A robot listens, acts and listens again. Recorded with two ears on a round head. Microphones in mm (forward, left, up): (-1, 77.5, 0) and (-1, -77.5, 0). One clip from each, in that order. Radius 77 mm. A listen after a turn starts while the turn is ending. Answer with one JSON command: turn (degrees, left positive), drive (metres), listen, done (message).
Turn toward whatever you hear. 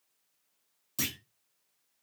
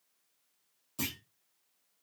{"turn": 45}
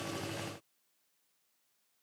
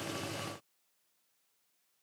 {"listen": true}
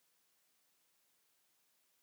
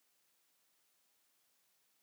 {"done": "I heard a clunk, but can't make it out now. It was about straight ahead or 90° left."}